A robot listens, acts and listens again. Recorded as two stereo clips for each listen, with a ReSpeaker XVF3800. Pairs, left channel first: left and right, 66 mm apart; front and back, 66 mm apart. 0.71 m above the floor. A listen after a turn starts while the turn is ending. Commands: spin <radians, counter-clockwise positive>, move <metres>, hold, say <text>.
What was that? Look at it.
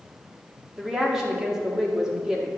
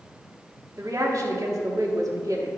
spin -2.97
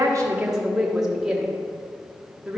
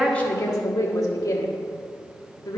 spin -0.17
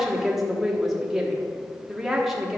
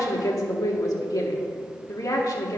say Facing the woman speaking.